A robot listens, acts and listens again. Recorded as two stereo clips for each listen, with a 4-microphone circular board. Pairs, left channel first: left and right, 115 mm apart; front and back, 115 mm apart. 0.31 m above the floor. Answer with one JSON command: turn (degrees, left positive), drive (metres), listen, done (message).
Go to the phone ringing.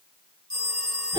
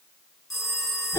{"turn": -90}
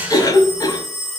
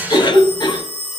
{"drive": 1.0}
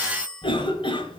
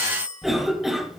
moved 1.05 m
{"turn": 10}
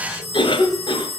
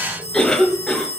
{"drive": 1.0}
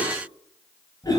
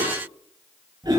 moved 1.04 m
{"listen": true}
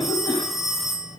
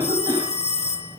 {"drive": 1.0}
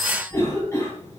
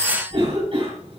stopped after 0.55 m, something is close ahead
{"done": "Arrived at the phone ringing, straight ahead."}